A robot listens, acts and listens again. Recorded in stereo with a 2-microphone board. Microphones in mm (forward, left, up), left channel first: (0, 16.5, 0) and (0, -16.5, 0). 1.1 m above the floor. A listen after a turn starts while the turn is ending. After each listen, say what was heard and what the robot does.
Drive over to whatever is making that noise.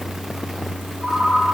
Turn 30° right.
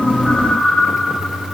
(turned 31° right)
So it is at 20° left. Turn 20° left.
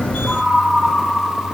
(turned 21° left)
Drive 1.0 m forward.
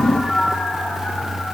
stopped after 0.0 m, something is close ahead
Blocked. The ringtone is further on, straight ahead.